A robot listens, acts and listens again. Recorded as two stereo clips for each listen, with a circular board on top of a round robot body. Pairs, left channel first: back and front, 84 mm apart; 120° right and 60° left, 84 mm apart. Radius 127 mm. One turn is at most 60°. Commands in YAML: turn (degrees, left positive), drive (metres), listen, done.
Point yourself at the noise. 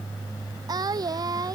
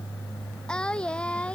turn: -45
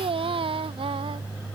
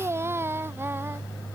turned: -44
done: "Found it: singing, straight ahead."